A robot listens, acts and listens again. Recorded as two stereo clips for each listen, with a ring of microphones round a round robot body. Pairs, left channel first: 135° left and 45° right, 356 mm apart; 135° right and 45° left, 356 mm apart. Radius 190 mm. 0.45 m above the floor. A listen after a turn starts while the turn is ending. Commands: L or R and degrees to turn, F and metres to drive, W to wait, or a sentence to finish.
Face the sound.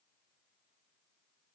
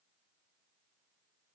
W
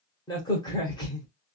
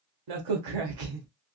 L55
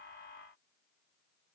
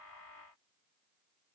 I heard a crack from this way, but can't make it out now.